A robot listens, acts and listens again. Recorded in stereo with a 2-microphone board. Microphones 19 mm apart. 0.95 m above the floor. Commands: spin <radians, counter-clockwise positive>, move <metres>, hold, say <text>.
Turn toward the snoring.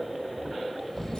spin 0.35
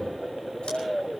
spin 2.53
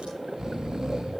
spin -0.70
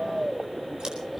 spin -0.17
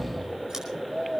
say Found it: snoring, straight ahead, 1 to 2 m away.